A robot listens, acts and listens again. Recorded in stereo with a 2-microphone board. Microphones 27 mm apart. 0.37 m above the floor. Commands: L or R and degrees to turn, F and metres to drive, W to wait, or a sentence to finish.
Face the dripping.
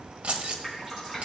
R30
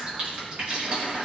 R135
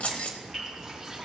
W
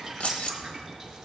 Facing the dripping.